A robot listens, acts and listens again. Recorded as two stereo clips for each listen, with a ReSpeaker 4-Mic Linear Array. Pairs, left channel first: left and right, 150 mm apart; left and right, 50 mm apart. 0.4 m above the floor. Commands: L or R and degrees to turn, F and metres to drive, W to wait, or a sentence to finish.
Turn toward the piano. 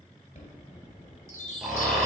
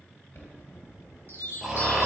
W
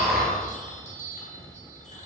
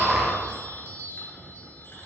W
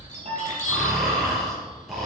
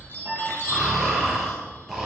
R50
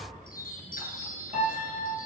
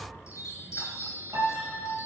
R80
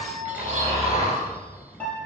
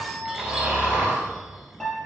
L10
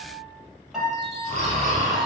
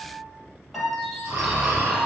Facing the piano, 2 to 4 m away.